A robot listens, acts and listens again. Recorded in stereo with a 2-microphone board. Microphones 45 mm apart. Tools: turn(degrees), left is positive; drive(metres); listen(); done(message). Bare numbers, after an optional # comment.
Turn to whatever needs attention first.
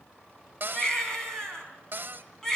turn(30)
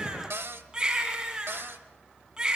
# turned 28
# So it is at 15° right.
turn(-15)
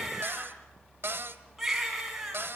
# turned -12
done("Facing the baby crying.")